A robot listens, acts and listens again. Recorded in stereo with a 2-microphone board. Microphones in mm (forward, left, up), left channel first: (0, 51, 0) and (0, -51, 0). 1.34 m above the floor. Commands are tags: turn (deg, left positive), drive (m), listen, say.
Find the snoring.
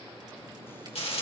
<listen/>
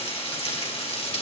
<listen/>
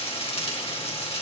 <say>I can't make out snoring, only frying.</say>